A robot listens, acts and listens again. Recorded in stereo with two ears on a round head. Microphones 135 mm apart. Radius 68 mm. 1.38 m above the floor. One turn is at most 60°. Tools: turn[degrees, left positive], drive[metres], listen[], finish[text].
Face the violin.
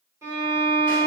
Thought: The violin: about 20° right or 160° right.
Action: turn[-20]
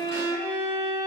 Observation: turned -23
Thought: So it is at 140° right.
Action: turn[-60]
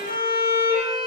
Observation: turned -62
Thought: The violin is now 80° right.
Action: turn[-60]
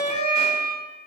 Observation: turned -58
Thought: The violin is now 20° right.
Action: turn[-20]
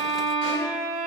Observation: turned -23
Action: finish[Found it: a violin, straight ahead.]